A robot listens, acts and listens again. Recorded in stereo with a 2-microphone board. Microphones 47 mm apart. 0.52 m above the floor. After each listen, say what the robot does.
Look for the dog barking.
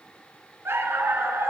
Turn 60° right.
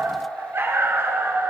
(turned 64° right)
Turn 60° right.
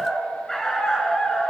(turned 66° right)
Turn 10° left.
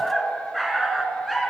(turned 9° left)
Found it: a dog barking, straight ahead, 1 to 2 m away.